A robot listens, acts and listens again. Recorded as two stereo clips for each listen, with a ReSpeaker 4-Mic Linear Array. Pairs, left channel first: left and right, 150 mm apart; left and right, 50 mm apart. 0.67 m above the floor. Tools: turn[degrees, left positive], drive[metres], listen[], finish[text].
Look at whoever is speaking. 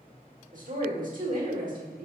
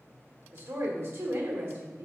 Thought: The woman speaking: about 60° right or 120° right.
Action: turn[-60]
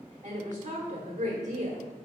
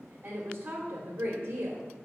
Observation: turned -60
Thought: So it is at 55° right.
Action: turn[-55]
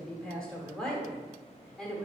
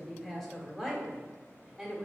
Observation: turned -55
Action: finish[Found it: a woman speaking, straight ahead, 1 to 2 m away.]